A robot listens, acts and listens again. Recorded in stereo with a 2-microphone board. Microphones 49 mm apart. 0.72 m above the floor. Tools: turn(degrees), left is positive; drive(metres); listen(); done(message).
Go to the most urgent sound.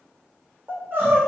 turn(degrees=-45)
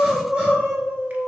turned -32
turn(degrees=-15)
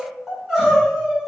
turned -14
drive(metres=1.0)
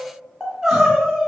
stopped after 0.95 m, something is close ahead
done("Arrived at the crying, straight ahead.")